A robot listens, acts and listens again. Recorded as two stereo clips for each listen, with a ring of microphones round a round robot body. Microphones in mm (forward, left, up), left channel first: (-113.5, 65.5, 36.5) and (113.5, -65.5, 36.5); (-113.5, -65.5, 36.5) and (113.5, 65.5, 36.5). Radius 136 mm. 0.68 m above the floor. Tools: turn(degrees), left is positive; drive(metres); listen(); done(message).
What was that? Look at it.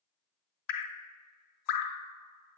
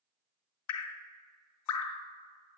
turn(degrees=180)
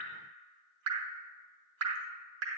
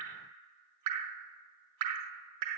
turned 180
turn(degrees=10)
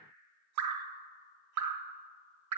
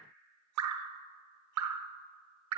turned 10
done("Found it: dripping, straight ahead.")